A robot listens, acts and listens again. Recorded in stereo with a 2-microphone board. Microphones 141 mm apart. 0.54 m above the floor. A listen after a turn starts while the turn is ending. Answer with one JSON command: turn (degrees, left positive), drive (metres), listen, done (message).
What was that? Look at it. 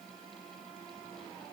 {"listen": true}
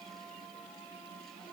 {"listen": true}
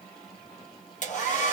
{"turn": 60}
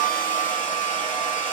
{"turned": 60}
{"turn": 65}
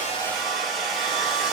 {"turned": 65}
{"done": "Found it: a hair dryer, straight ahead."}